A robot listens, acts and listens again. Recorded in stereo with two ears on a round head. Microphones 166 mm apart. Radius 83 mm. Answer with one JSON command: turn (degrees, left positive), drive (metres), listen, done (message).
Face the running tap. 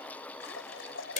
{"turn": 75}
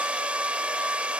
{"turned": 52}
{"listen": true}
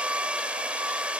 {"listen": true}
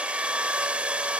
{"done": "I heard a running tap, but can't make it out now. It was about 25° left or 55° left."}